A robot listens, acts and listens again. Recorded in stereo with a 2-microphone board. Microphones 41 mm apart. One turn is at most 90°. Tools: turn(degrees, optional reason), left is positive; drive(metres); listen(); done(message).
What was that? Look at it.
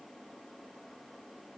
listen()
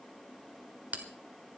turn(degrees=-45, reason="The bell: about 45° right or 135° right.")
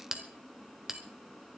turn(degrees=-15, reason="So it is at 15° right.")
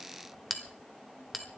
done("Facing the bell.")